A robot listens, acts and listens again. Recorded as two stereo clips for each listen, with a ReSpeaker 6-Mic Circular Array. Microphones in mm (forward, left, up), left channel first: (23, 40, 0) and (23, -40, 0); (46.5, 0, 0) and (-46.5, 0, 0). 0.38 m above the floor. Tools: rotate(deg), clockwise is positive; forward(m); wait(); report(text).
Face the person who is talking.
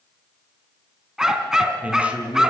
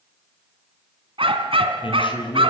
rotate(15)
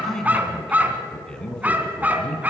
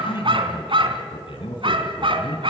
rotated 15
rotate(-15)
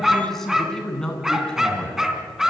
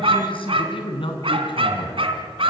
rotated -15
rotate(-15)
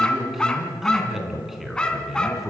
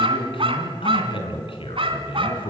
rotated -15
report("Facing the man speaking, 2 to 4 m away.")